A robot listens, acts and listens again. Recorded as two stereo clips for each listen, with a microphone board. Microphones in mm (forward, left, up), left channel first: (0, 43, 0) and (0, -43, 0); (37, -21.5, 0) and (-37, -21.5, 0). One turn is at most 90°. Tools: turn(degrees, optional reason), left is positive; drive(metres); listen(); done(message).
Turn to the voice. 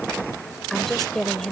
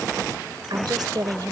turn(degrees=90, reason="The woman speaking: 175° left.")
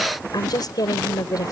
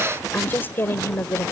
turn(degrees=55, reason="The woman speaking is now 55° left.")
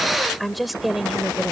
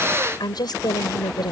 done("Facing the woman speaking.")